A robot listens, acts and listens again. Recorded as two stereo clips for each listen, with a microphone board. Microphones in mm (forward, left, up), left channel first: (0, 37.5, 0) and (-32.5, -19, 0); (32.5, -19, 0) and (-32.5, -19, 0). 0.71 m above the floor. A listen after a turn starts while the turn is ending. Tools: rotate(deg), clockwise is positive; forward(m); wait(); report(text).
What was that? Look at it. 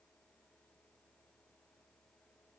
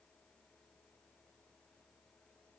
wait()
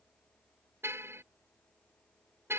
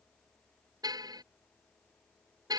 rotate(170)
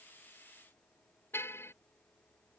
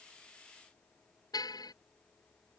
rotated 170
rotate(-10)
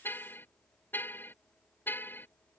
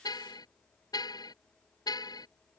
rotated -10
report("Found it: a car horn, straight ahead.")